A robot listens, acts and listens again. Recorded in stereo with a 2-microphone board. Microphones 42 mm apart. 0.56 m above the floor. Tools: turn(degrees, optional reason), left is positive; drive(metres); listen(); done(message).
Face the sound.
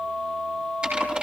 turn(degrees=-25, reason="The typing on a keyboard: about 25° right or 155° right.")
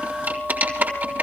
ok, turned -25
turn(degrees=-135, reason="So it is at 135° right.")
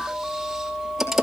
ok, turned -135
done("Found it: typing on a keyboard, straight ahead, over 4 m away.")